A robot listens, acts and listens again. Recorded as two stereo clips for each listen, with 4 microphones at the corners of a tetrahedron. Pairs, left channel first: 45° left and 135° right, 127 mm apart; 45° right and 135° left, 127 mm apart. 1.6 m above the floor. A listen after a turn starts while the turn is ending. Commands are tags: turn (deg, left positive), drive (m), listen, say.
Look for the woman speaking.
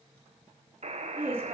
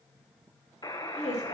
<turn deg="-65"/>
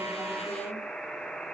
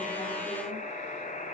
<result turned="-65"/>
<listen/>
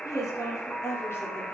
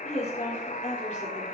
<turn deg="-25"/>
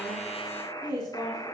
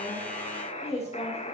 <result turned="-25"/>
<turn deg="-15"/>
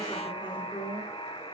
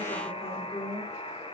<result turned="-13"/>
<say>Found it: a woman speaking, straight ahead.</say>